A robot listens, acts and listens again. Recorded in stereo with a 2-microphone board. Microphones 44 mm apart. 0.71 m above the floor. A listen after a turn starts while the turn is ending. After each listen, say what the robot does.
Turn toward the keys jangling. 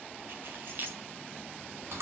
Turn 50° right.
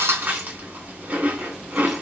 Keep listening.
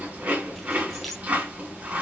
Keep listening.
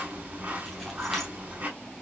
I heard keys jangling, but can't make it out now. It was about straight ahead or 80° right.